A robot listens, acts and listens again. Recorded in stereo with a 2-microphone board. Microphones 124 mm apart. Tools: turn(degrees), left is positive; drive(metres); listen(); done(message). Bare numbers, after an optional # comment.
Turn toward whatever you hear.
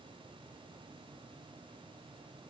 listen()
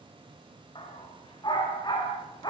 # The dog barking: about 35° left or 145° left.
turn(35)
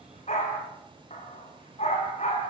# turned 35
# So it is at 115° left.
turn(115)
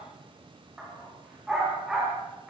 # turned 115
done("Found it: a dog barking, straight ahead, over 4 m away.")